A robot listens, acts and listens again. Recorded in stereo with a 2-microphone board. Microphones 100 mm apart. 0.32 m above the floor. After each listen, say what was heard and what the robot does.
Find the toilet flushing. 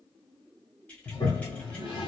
The toilet flushing: about 45° left or 135° left. Turn 45° left.
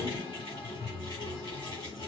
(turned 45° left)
So it is at 80° left. Turn 80° left.
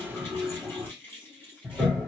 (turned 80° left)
The toilet flushing is now 15° right. Turn 15° right.
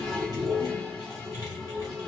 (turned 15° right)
Found it: a toilet flushing, straight ahead.